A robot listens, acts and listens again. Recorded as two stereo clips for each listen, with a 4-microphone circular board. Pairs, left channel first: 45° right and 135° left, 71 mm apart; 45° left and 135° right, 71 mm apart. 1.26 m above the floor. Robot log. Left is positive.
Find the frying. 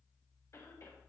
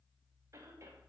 cmd idle
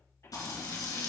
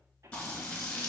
note: The frying: 30° right.
cmd yaw -30
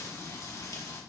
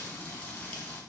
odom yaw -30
note: The frying is now 20° right.
cmd yaw -20
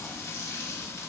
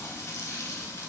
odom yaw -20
end: Found it: frying, straight ahead, 2 to 4 m away.